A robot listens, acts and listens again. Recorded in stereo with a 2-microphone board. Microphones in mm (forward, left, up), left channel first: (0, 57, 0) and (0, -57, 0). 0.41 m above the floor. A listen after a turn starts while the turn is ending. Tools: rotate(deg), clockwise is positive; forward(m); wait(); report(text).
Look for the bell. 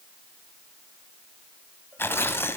wait()
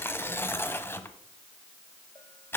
wait()
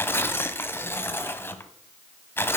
report("I can't make out a bell, only tearing paper.")